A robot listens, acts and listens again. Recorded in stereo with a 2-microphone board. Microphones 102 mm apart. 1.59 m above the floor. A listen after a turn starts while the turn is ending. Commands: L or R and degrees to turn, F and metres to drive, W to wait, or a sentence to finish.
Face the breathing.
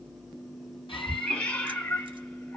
L60
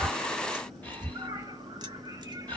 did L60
L15
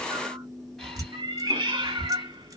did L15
Facing the breathing.